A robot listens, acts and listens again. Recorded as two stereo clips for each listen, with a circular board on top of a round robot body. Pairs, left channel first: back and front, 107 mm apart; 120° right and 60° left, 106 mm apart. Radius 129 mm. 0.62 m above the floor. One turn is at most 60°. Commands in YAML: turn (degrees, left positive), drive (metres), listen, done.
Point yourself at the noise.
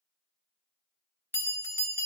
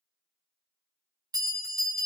turn: 60
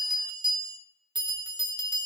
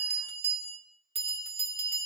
turn: 45
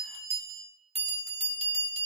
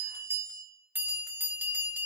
turn: -10
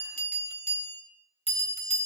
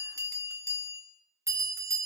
done: "Facing the bell, 1 to 2 m away."